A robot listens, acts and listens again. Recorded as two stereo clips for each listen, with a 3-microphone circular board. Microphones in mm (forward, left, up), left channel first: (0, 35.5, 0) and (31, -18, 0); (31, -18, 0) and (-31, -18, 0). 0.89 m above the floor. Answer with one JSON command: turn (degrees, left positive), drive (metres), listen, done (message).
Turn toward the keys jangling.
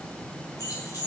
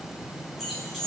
{"turn": 90}
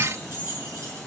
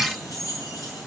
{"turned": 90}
{"turn": -15}
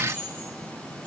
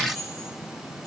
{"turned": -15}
{"done": "Found it: keys jangling, straight ahead."}